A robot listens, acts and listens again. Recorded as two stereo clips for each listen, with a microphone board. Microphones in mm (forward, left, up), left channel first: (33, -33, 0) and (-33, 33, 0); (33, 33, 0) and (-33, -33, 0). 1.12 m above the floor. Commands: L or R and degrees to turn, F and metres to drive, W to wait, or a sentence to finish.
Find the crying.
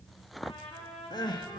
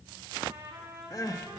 Facing the crying.